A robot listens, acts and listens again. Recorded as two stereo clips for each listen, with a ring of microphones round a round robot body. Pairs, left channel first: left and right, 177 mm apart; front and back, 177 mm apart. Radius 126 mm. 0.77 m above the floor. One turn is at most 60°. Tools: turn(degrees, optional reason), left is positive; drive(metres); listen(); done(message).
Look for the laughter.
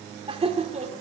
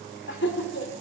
turn(degrees=-40, reason="The laughter: 40° right.")
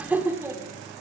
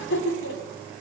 turn(degrees=-15, reason="The laughter is now 15° right.")
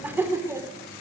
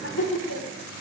turn(degrees=-15, reason="The laughter is now 15° right.")
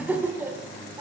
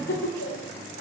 turn(degrees=-15, reason="The laughter is now 15° right.")
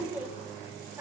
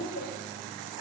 turn(degrees=-10, reason="The laughter is now 10° right.")
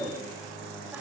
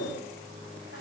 listen()
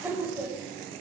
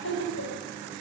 turn(degrees=-10, reason="The laughter is now 10° right.")
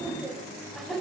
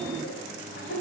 done("Found it: laughter, straight ahead.")